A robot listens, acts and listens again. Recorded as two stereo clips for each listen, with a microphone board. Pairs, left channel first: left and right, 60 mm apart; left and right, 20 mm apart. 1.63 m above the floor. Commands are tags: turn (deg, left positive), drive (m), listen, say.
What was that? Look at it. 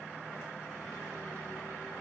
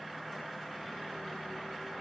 <listen/>
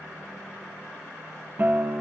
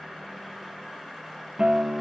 <turn deg="-35"/>
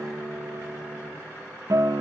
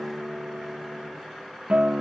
<turn deg="-110"/>
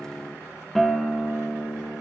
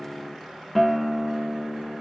<say>Found it: a guitar, straight ahead, 2 to 4 m away.</say>